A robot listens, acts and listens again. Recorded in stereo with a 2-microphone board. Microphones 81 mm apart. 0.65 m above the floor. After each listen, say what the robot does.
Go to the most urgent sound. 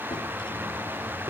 Keep listening.
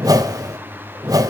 Keep listening.
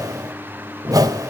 I can't make out anything urgent, only a whoosh.